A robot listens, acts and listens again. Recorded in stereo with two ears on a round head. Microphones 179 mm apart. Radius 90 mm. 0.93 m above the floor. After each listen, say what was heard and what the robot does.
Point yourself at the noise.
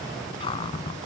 The cupboard door: about 25° left or 155° left. Turn 25° left.
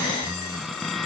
Facing the cupboard door.